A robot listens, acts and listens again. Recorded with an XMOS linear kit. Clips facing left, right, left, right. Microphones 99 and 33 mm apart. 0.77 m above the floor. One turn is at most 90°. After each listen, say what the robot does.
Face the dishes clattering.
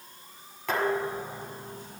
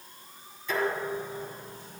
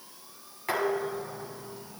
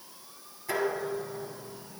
Turn 70° left.
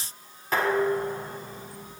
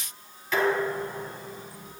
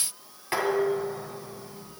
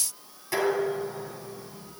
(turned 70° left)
Turn 40° left.
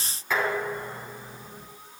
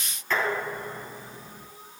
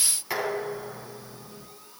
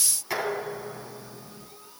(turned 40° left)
Found it: dishes clattering, straight ahead, over 4 m away.